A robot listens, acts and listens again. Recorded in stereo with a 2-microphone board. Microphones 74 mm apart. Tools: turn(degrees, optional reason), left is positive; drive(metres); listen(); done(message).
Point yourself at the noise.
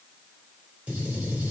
turn(degrees=-15, reason="The gunshot: about 15° right or 165° right.")
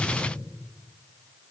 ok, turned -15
turn(degrees=-150, reason="So it is at 150° right.")
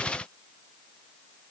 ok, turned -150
done("I heard a gunshot from this way, but can't make it out now.")